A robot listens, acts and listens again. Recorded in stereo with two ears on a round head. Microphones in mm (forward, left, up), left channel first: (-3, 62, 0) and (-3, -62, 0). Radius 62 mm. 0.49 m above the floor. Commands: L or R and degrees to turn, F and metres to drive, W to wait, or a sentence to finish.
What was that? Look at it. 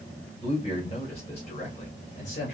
L55
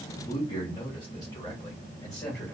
L20
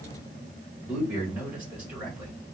Facing the man speaking.